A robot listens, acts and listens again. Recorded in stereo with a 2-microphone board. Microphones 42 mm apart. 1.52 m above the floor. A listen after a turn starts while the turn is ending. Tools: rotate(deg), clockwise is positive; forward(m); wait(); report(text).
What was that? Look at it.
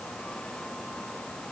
wait()
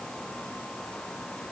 wait()
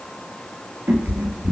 rotate(55)
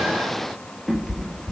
report("Facing the cat meowing.")